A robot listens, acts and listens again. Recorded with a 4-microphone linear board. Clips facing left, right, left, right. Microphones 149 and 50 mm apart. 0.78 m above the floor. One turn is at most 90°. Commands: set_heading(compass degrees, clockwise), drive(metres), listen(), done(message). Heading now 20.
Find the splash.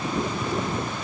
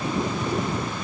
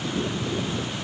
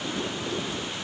listen()
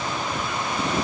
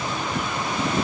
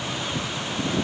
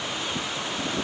listen()
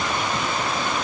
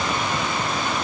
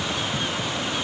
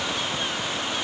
done("I can't make out a splash to turn to.")